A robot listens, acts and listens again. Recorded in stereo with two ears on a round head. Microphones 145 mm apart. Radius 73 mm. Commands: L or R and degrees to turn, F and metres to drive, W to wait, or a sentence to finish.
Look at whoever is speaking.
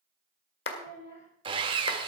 L45
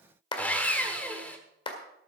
W
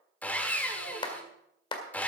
W
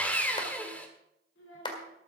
L90
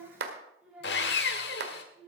R10
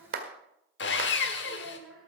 Facing the child speaking.